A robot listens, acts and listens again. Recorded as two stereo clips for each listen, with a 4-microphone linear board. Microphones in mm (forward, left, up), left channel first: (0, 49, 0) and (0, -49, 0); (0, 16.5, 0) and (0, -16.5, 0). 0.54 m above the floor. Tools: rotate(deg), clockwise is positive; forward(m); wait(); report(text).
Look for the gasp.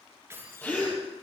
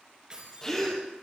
rotate(-15)
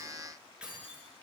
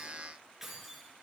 wait()
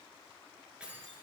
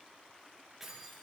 report("I heard a gasp, but can't make it out now. It was about straight ahead or 150° left.")